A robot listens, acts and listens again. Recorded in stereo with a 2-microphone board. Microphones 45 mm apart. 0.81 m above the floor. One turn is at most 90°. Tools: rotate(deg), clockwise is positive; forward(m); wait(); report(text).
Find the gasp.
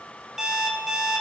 wait()
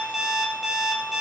wait()
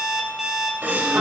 rotate(45)
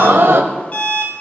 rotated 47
rotate(80)
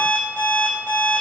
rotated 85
report("Facing where the gasp came from. I can't hear it now.")